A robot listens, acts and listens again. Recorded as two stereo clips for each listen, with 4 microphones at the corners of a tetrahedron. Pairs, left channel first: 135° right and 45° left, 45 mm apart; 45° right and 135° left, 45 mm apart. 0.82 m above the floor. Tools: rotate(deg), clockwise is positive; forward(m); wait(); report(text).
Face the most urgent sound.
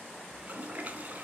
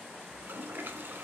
wait()
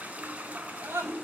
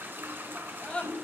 rotate(-20)
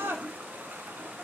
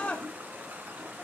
rotate(-10)
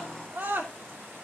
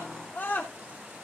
report("Facing the scream, 2 to 4 m away.")